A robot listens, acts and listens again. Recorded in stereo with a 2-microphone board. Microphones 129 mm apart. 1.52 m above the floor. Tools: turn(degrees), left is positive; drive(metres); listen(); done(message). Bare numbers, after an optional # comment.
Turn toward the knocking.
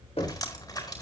# The knocking: about 60° left or 120° left.
turn(60)
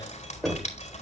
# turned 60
done("Facing the knocking, 2 to 4 m away.")